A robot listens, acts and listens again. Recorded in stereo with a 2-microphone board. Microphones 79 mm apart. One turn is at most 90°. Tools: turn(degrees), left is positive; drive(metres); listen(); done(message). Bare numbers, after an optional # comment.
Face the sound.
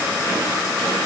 listen()
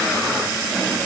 listen()
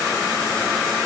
done("I can't make out anything to turn to.")